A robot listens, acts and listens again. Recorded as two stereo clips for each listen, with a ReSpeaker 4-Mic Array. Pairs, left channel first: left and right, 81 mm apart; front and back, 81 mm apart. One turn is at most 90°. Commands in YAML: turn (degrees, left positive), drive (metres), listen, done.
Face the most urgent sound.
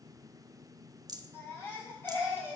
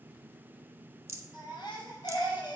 turn: 30
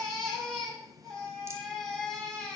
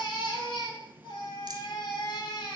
done: "Found it: a baby crying, straight ahead."